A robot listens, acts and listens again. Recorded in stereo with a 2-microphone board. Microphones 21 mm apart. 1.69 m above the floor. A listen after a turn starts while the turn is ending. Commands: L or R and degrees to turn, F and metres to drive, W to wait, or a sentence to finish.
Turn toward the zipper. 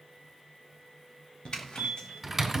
L50
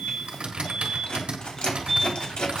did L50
L75
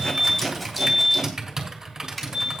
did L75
Facing the zipper, 2 to 4 m away.